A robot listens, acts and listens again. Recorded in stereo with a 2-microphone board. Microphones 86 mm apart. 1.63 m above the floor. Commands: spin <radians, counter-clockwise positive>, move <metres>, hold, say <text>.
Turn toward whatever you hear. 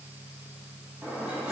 spin -0.52
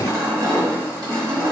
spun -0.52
spin -2.36
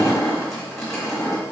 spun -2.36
say Facing the crushing, 1 to 2 m away.